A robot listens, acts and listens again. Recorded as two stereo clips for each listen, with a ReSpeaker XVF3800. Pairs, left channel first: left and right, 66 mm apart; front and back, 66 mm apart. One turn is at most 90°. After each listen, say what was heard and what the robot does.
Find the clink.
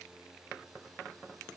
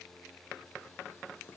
Keep listening.
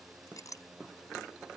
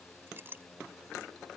The clink: 120° left. Turn 90° left.
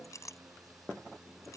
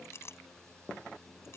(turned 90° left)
The clink is now 50° left. Turn 50° left.
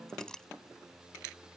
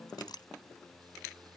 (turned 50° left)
The clink is now 10° left. Turn 10° left.
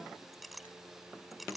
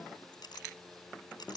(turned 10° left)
Facing the clink.